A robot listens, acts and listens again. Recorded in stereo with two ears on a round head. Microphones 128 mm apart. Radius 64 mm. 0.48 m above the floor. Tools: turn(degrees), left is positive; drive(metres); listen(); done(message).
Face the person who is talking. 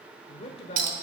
turn(degrees=45)
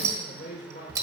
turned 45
turn(degrees=85)
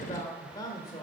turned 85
turn(degrees=35)
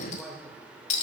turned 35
done("Facing the man speaking, 1 to 2 m away.")